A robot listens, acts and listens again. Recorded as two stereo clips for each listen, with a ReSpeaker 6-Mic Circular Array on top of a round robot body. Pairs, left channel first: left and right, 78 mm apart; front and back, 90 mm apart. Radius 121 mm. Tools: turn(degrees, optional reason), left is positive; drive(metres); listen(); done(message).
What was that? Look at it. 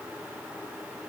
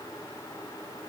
listen()
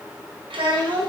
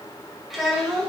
turn(degrees=-90, reason="The child speaking: 90° right.")
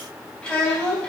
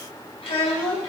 turn(degrees=10, reason="The child speaking is now 10° left.")
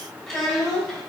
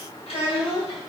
done("Found it: a child speaking, straight ahead, 2 to 4 m away.")